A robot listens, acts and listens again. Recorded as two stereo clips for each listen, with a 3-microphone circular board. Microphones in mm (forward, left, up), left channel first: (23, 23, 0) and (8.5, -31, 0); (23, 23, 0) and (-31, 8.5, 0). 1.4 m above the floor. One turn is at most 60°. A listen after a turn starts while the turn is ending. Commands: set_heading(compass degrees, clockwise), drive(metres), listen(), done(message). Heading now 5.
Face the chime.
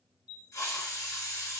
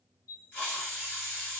set_heading(40)
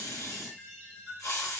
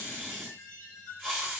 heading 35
done("Found it: a chime, straight ahead, 1 to 2 m away.")